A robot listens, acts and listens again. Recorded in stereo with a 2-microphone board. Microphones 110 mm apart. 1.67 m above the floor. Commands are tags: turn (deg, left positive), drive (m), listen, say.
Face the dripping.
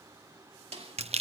<listen/>
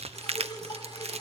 <turn deg="40"/>
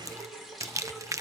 <say>Facing the dripping, over 4 m away.</say>